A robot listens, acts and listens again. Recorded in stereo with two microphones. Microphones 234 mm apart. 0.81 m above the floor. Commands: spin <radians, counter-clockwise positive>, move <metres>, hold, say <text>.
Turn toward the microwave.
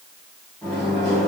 spin 0.52
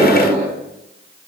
spin 2.62
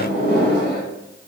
spin 0.87
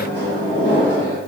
spin 0.35
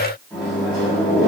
say Facing the microwave, 1 to 2 m away.